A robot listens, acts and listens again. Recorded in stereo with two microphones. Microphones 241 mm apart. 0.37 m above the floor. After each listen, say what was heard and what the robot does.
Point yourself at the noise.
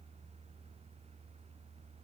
Keep listening.
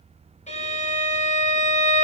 The violin: about 30° left or 150° left. Turn 30° left.
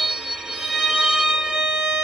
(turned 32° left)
Found it: a violin, straight ahead, 1 to 2 m away.